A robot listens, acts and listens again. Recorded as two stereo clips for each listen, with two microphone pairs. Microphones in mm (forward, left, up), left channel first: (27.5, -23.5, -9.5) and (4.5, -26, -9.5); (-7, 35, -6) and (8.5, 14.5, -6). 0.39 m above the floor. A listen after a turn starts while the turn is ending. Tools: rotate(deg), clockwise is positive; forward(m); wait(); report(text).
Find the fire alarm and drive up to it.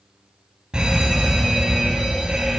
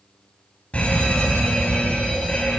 rotate(-140)
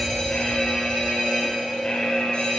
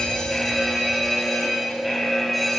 rotate(-40)
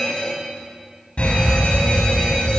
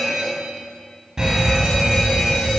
forward(1.0)
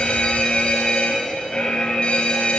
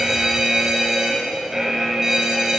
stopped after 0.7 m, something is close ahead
rotate(-10)
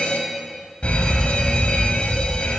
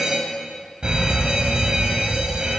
report("Blocked. The fire alarm is further on, straight ahead.")